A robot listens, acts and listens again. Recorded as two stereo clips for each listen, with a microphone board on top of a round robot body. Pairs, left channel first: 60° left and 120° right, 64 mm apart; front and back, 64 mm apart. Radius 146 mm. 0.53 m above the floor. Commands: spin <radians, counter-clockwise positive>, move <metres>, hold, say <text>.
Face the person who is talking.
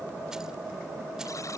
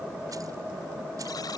hold
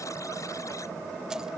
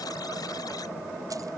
hold
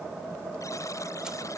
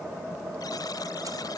say I can't make out anyone speaking to turn to.